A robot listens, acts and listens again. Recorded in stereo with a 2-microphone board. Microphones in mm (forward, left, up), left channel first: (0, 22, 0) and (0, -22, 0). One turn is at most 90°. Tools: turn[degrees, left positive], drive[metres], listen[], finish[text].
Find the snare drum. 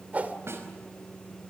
Thought: The snare drum: about 70° right or 110° right.
Action: turn[-70]
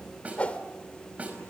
Thought: So it is at 35° right.
Action: turn[-35]
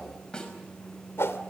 Thought: The snare drum is now 20° left.
Action: turn[20]
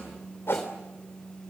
Action: listen[]
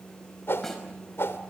Action: listen[]
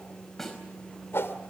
Action: finish[Found it: a snare drum, straight ahead, over 4 m away.]